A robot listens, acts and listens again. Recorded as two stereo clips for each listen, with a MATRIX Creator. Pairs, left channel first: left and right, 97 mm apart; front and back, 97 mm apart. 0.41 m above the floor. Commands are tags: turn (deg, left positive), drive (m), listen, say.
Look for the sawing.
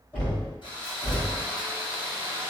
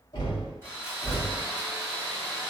<turn deg="60"/>
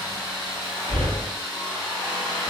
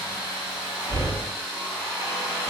<say>Facing the sawing.</say>